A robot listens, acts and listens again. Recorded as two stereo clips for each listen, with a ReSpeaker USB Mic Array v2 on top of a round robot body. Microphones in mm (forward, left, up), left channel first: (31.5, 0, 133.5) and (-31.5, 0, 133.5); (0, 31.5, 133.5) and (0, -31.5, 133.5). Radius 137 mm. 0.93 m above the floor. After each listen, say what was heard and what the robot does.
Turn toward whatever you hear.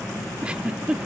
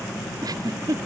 The giggle: 105° right. Turn 105° right.
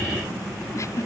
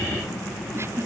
Keep listening.
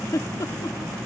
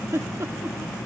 The giggle is now 40° right. Turn 40° right.
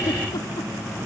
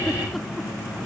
Keep listening.
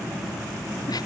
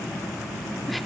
Keep listening.
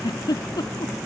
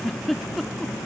Found it: a giggle, straight ahead.